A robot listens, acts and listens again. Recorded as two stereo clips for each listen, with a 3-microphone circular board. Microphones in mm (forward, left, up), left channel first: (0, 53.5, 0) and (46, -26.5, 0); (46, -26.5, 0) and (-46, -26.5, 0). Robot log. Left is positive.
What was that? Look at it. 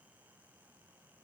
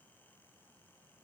cmd idle
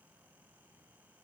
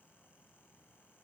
cmd idle
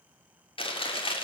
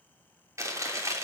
note: The chewing: 125° left.
cmd yaw +125
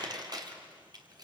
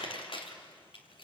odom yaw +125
note: The chewing is now 20° right.
cmd yaw -20
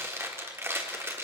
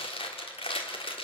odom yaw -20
end: Facing the chewing, 2 to 4 m away.